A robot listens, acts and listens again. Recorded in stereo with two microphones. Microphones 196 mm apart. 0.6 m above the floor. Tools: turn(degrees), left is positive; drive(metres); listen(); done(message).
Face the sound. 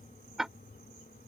turn(degrees=30)
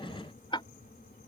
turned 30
turn(degrees=155)
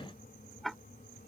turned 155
done("Found it: ticking, straight ahead.")